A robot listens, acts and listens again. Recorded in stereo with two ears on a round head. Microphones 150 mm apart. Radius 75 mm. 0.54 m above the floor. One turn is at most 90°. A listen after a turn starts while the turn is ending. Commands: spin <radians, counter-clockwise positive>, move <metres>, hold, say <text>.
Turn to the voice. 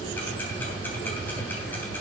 hold
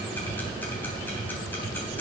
hold
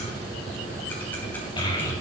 spin 0.44
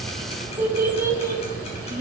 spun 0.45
spin -0.35
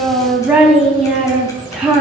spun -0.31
say Found it: a child speaking, straight ahead, 2 to 4 m away.